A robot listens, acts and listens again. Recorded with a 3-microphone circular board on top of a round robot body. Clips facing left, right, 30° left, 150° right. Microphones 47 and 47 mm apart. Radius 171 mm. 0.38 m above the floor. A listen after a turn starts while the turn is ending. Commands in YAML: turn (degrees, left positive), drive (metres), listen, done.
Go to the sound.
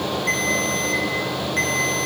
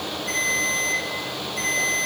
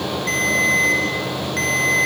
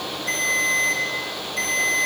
turn: 65
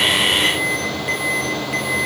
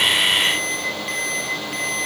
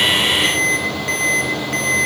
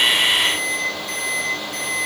drive: 1.0
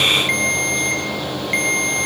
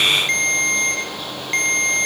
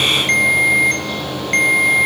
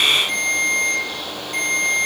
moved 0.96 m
turn: 15
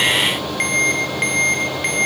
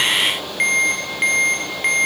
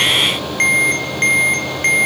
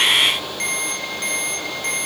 drive: 1.0
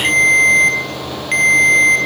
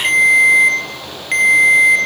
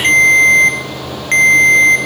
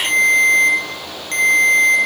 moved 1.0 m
drive: 1.0
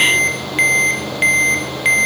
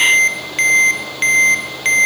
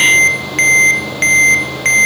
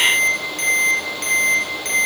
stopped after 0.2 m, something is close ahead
turn: 10
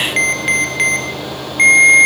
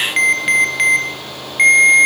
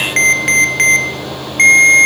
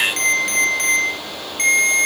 done: "Arrived at the ringtone, straight ahead."